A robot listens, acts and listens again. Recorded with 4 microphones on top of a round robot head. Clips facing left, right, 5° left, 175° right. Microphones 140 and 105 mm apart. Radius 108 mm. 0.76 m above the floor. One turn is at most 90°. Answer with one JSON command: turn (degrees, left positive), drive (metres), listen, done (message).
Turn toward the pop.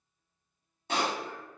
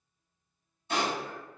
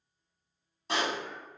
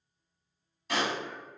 {"turn": 65}
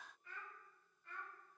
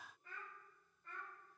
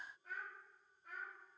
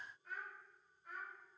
{"done": "Facing where the pop came from. I can't hear it now."}